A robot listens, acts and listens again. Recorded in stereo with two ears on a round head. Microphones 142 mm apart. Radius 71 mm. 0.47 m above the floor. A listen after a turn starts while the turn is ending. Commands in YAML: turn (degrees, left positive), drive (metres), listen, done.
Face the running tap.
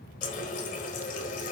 turn: 55
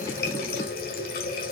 turn: 65
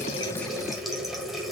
done: "Facing the running tap, 1 to 2 m away."